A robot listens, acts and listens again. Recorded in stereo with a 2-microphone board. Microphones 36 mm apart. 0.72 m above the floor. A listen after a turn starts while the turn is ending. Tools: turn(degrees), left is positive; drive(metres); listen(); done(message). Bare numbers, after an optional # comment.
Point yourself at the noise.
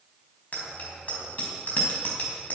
# The bicycle bell: about 50° left or 130° left.
turn(50)
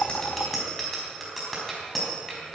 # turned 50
done("Found it: a bicycle bell, straight ahead.")